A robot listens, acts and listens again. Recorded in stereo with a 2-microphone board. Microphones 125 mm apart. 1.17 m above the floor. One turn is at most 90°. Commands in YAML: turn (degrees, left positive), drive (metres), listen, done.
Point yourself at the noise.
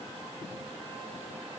listen: true
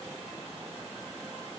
listen: true
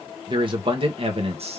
turn: -60
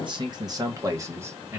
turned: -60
turn: -20
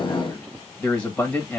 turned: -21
turn: 10
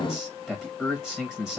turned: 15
done: "Found it: a man speaking, straight ahead, 1 to 2 m away."